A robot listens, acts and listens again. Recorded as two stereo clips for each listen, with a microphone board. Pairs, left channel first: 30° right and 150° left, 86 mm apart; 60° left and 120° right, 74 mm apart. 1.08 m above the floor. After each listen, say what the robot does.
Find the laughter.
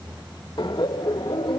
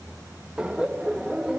Turn 40° right.
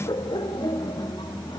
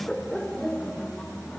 Turn 15° right.
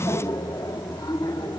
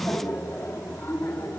Facing the laughter.